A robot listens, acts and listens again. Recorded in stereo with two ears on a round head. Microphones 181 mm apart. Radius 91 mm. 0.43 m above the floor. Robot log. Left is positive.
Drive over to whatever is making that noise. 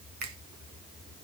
note: The finger snap: about 50° right or 130° right.
cmd yaw -50
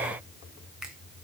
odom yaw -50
cmd fwd 1.0
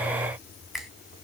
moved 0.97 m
cmd fwd 1.0
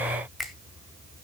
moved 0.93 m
cmd fwd 1.0
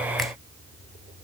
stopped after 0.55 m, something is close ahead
cmd idle
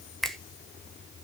end: Arrived at the finger snap, straight ahead.